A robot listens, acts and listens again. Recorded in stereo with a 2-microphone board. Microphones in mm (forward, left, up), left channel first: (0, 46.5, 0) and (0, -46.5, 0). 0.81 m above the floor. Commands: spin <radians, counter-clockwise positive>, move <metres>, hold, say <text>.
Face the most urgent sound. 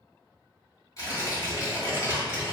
hold
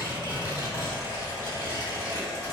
hold
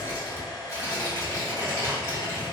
say I can't make out anything urgent, only a hair dryer and tearing paper.